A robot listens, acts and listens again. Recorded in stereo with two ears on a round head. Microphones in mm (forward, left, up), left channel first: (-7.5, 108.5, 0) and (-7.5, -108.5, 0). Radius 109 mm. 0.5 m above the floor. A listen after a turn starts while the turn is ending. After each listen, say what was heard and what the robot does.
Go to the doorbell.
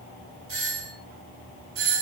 The doorbell: about 60° right or 120° right. Turn 60° right.
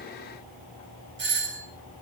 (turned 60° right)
So it is at 55° right. Turn 55° right.
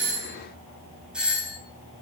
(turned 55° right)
Drive 1.0 m forward.
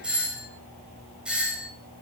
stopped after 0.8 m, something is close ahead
Blocked. The doorbell is further on, straight ahead.